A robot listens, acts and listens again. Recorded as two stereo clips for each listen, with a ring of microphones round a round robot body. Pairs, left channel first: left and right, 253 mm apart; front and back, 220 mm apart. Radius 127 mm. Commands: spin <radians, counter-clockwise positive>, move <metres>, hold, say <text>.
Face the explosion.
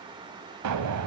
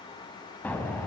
spin -1.48
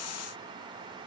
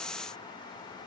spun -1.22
spin -0.26
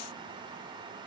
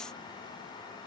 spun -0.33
say Facing where the explosion came from. I can't hear it now.